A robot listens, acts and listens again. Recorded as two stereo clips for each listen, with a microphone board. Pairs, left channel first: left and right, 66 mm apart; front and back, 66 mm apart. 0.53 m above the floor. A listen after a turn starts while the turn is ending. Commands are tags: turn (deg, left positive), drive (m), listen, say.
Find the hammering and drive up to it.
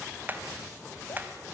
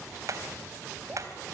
<turn deg="-150"/>
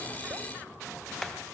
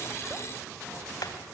<drive m="1.0"/>
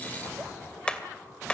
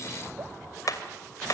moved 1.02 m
<turn deg="15"/>
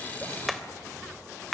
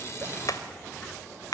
<drive m="1.0"/>
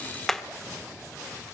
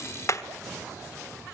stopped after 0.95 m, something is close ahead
<say>Arrived at the hammering, straight ahead.</say>